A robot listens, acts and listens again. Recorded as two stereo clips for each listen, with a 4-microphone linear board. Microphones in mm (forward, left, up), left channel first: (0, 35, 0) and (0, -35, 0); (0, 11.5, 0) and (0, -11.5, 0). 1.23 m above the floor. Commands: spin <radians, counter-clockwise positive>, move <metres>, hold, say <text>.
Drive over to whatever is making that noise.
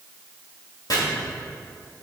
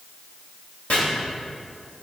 spin 1.13
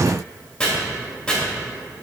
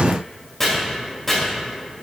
spin 0.17
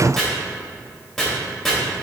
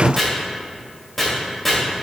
move 1.0
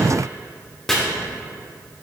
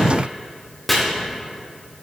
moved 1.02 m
move 1.0
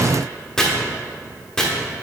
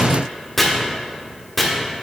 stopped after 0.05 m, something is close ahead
spin 0.17
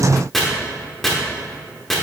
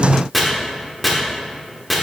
say I am next to the chopping.